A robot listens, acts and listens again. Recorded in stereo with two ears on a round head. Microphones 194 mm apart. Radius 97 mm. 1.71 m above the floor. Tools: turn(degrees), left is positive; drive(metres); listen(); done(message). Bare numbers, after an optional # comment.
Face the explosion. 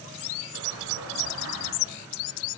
turn(-90)
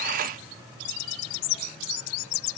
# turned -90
done("I heard an explosion from this way, but can't make it out now.")